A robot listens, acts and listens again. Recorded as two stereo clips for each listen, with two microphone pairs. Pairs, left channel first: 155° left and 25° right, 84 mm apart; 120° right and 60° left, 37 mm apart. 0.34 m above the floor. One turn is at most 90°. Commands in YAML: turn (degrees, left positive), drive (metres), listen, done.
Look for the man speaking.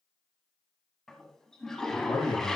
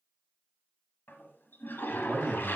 turn: 90
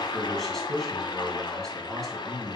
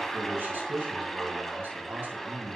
turn: 70
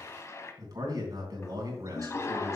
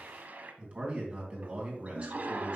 turn: 10
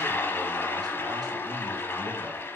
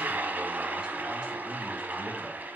listen: true
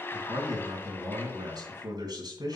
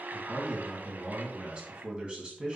done: "Facing the man speaking."